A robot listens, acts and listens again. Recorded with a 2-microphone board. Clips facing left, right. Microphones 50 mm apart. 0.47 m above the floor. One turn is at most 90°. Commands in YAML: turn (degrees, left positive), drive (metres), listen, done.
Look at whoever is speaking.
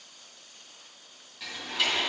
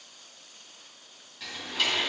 listen: true
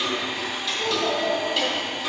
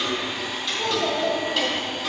turn: 30
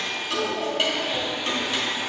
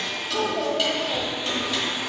turn: -30
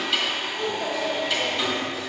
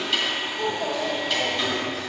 done: "Found it: a child speaking, straight ahead, 1 to 2 m away."